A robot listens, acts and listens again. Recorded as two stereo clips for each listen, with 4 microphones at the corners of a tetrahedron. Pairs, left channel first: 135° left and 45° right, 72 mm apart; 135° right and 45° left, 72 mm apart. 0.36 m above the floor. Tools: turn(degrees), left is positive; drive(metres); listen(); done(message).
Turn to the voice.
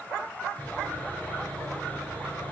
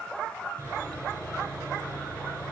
listen()
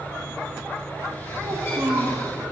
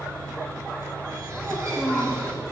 turn(degrees=-30)
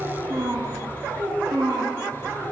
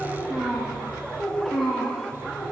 turn(degrees=-50)
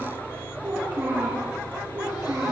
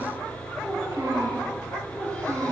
turn(degrees=10)
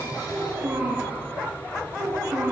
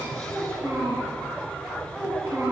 done("Facing the child speaking, 2 to 4 m away.")